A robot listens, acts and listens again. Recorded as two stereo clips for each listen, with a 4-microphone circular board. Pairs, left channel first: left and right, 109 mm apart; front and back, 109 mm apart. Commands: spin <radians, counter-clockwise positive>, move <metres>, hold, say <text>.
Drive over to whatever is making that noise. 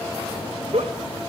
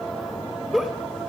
spin -1.66
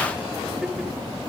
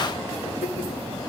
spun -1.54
hold
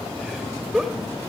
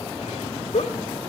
move 1.0
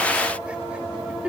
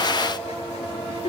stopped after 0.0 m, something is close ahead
spin -0.17
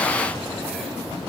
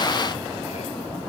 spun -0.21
hold
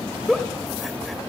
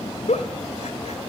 say Something is in my way. I am facing the giggle but have not reached it.